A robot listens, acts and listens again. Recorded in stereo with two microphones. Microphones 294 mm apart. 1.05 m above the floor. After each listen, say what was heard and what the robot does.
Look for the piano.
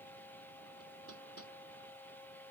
Keep listening.
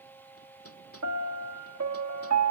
The piano: about 60° right or 120° right. Turn 60° right.
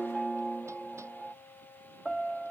Facing the piano.